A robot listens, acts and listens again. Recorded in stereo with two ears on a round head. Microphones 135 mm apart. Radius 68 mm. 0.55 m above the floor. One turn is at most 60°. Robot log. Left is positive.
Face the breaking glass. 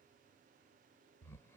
cmd idle
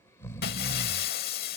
note: The breaking glass: about 70° left or 110° left.
cmd yaw +60
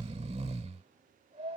cmd idle
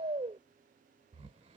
end: I heard breaking glass, but can't make it out now. It was about 10° left or 50° left.